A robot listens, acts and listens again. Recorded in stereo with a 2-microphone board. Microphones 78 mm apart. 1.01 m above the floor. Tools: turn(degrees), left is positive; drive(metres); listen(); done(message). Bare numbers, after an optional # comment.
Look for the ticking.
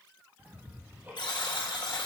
# The ticking: about 25° right or 155° right.
turn(-25)
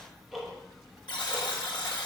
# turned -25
done("Found it: ticking, straight ahead.")